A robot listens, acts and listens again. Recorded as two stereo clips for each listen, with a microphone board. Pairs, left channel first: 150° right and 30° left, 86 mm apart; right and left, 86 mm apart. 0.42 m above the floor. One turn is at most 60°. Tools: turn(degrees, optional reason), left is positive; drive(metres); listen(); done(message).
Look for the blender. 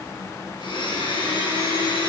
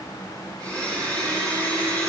turn(degrees=-60, reason="The blender: 170° right.")
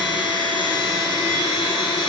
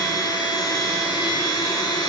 turn(degrees=-60, reason="The blender is now 130° right.")
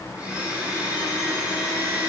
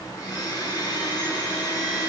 turn(degrees=-45, reason="The blender is now 45° right.")
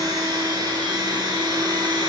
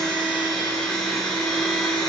done("Facing the blender, 2 to 4 m away.")